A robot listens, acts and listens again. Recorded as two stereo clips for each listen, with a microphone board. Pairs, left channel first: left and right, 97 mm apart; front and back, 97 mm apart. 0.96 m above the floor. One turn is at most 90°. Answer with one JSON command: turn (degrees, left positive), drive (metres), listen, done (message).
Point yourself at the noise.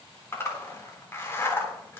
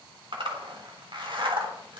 {"turn": 90}
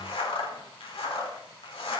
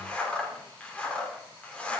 {"turn": 75}
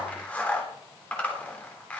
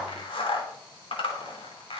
{"turn": 15}
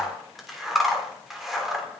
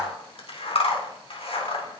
{"done": "Facing the zipper."}